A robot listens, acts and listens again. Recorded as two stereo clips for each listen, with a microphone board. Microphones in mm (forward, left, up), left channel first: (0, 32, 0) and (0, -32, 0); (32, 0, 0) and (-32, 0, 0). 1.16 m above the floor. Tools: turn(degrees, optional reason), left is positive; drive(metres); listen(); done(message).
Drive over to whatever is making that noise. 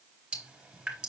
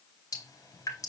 turn(degrees=-15, reason="The dripping: 15° right.")
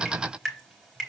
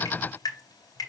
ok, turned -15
drive(metres=1.0)
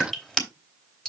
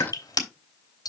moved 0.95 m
turn(degrees=10, reason="The dripping is now 10° left.")
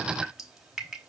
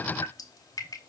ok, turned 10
drive(metres=1.0)
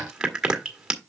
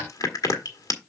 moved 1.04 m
turn(degrees=-10, reason="The dripping is now 10° right.")
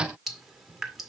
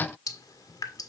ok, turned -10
drive(metres=1.0)
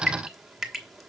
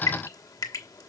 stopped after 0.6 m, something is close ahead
done("I am next to the dripping.")